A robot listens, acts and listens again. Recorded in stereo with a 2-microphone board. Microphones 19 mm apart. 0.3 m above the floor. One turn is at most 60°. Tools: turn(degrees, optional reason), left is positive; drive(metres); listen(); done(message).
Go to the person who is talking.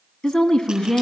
turn(degrees=55, reason="The woman speaking: about 55° left or 125° left.")
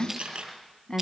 turn(degrees=55, reason="So it is at 55° left.")
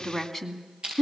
drive(metres=1.0)
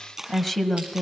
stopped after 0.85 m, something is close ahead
done("Arrived at the woman speaking, straight ahead.")